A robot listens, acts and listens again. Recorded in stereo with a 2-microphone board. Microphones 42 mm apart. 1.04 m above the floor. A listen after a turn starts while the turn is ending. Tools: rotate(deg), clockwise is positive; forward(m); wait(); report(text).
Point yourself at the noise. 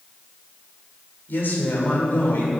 rotate(-65)
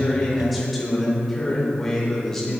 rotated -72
rotate(-15)
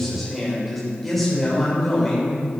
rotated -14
rotate(-10)
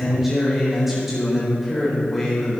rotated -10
report("Facing the man speaking.")